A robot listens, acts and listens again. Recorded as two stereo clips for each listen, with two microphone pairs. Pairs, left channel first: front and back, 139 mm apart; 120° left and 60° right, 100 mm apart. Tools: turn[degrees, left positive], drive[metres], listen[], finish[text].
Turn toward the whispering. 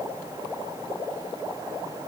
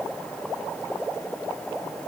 Action: listen[]
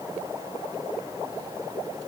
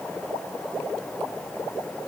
Action: listen[]
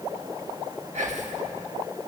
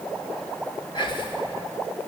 Thought: The whispering: 155° left.
Action: turn[155]
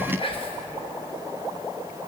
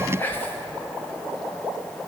Thought: The whispering is now 50° left.
Action: turn[50]
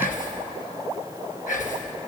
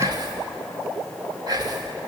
Thought: The whispering is now 15° right.
Action: turn[-15]
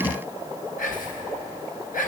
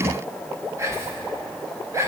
Action: finish[Found it: whispering, straight ahead.]